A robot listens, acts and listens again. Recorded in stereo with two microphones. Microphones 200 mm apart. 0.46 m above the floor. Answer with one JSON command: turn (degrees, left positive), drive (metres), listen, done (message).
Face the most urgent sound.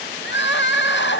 {"turn": 65}
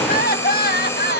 {"turn": 50}
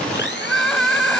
{"done": "Found it: crying, straight ahead."}